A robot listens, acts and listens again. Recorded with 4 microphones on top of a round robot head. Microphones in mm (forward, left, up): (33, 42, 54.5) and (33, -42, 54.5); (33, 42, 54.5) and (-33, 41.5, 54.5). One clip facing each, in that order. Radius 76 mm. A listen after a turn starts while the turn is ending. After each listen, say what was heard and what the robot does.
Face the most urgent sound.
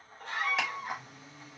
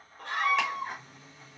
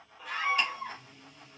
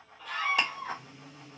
The scream: 80° right. Turn 80° right.
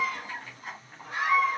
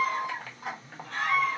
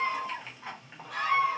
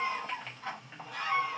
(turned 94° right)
The scream is now 15° left. Turn 15° left.
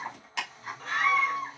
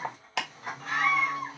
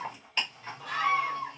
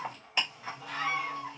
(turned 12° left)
Facing the scream.